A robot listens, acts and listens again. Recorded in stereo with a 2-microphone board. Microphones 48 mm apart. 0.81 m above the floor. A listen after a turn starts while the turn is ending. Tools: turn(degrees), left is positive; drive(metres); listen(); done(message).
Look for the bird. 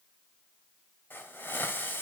listen()
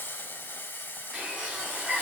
turn(degrees=-30)
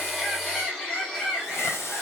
turn(degrees=20)
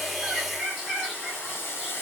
done("Facing the bird, over 4 m away.")